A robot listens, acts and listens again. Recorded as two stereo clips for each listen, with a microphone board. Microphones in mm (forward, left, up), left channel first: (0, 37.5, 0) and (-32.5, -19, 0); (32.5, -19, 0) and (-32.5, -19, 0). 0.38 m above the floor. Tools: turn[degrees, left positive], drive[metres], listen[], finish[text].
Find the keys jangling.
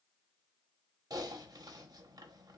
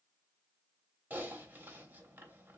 Action: listen[]
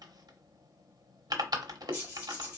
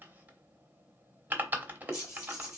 Thought: The keys jangling: 50° right.
Action: turn[-50]
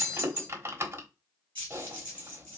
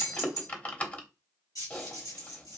Action: finish[Found it: keys jangling, straight ahead, 2 to 4 m away.]